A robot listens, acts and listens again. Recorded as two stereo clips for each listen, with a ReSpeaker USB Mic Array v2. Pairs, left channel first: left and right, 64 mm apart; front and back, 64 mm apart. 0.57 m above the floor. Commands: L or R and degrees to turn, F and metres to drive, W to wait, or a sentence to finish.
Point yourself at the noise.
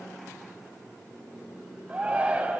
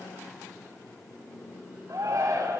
R160
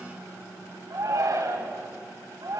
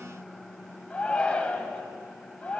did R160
R70
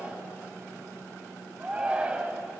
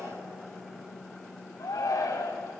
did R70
R20
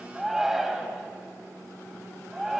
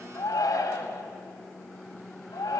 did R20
Found it: a shout, straight ahead, 2 to 4 m away.